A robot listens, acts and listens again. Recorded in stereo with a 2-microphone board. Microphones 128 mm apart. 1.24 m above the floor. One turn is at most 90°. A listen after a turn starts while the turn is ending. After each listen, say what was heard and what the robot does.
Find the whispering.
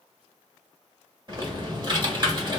Keep listening.
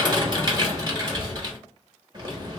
Keep listening.
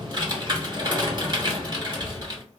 I can't make out whispering, only typing on a keyboard.